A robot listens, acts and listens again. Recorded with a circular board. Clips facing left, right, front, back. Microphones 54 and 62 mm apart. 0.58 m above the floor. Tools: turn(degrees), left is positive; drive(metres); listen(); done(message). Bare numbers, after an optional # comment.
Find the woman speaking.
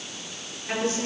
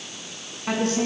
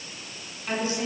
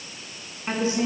# The woman speaking: 115° right.
turn(-115)
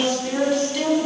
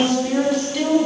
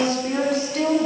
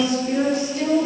done("Facing the woman speaking, over 4 m away.")